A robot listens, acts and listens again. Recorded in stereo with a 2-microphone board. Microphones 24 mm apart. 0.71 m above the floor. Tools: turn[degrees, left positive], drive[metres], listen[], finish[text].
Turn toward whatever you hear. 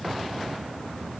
Action: listen[]
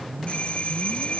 Thought: The doorbell: about 60° left or 120° left.
Action: turn[60]
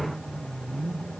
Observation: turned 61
Action: listen[]
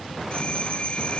Thought: So it is at 55° left.
Action: turn[55]
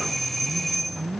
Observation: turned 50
Action: finish[Facing the doorbell.]